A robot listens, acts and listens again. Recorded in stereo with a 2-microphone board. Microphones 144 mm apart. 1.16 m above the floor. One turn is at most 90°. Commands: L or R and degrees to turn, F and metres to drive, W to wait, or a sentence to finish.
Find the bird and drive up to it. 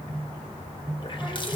W
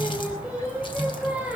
W
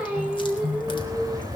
R25
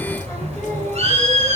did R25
R90
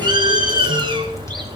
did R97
R35
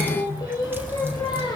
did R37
F1.0
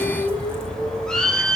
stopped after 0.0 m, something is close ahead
Something is in my way. I am facing the bird but have not reached it.